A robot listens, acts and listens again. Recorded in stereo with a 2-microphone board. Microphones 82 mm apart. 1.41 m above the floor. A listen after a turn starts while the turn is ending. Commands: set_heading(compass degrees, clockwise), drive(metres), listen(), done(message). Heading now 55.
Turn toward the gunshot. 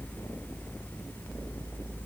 listen()
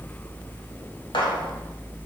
set_heading(340)
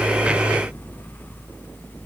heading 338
listen()
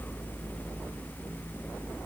done("I heard a gunshot, but can't make it out now. It was about 5° right or 30° left.")